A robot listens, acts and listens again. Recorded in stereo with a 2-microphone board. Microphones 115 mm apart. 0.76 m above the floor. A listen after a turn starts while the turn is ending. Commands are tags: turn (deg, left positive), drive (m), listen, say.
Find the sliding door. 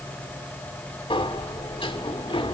<turn deg="50"/>
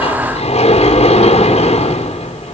<turn deg="75"/>
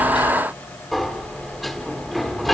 <say>Found it: a sliding door, straight ahead, 2 to 4 m away.</say>